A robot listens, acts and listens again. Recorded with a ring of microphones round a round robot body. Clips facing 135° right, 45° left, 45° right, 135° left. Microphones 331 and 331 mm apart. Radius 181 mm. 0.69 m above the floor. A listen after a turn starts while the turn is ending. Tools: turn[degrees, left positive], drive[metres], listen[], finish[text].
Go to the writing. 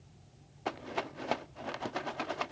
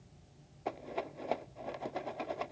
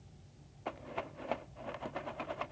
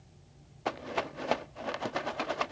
Action: listen[]
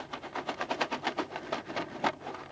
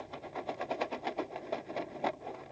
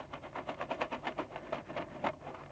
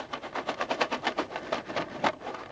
Action: listen[]
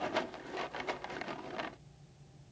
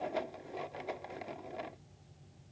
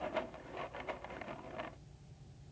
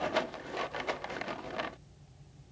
Action: finish[I can't make out writing to turn to.]